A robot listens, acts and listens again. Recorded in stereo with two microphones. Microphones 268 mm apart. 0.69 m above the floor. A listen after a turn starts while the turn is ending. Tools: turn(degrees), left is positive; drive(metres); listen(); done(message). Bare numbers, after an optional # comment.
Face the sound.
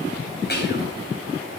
# The whispering: about 40° left or 140° left.
turn(40)
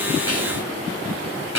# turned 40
# So it is at 100° left.
turn(100)
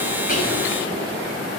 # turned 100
listen()
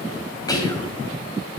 # The whispering is now 15° left.
turn(15)
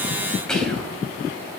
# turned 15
done("Found it: whispering, straight ahead, 2 to 4 m away.")